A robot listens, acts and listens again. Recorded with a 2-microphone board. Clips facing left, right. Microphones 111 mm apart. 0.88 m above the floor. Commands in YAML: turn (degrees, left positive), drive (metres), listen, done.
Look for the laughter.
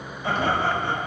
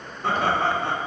turn: -65
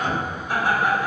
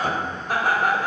turn: -55
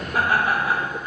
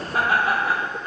turn: -35
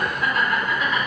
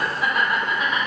turn: -20
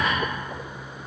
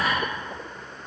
turn: -15
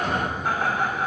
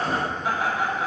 done: "Found it: laughter, straight ahead, 2 to 4 m away."